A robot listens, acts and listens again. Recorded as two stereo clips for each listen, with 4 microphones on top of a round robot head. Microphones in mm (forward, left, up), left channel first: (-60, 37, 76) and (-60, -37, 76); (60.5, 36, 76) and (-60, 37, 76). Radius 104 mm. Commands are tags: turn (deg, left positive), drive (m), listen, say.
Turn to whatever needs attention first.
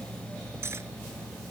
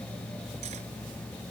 <listen/>
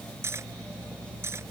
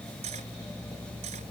<listen/>
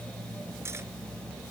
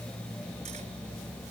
<say>I can't make out anything urgent to turn to.</say>